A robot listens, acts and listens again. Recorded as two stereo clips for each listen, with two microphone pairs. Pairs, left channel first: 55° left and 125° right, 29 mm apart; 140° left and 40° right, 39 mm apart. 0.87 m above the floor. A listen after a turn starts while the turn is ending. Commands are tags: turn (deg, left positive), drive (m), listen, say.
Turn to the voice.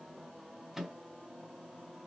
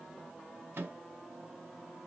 <listen/>
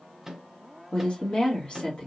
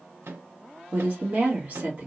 <say>Found it: a woman speaking, straight ahead, 1 to 2 m away.</say>